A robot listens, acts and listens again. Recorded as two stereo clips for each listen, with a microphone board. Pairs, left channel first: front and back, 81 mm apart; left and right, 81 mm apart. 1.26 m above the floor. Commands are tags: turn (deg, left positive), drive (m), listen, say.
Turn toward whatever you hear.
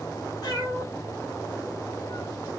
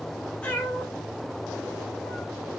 <turn deg="15"/>
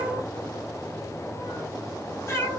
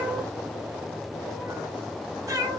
<turn deg="-55"/>
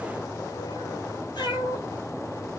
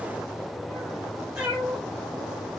<turn deg="-15"/>
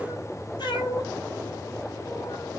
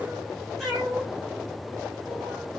<say>Facing the cat meowing, 1 to 2 m away.</say>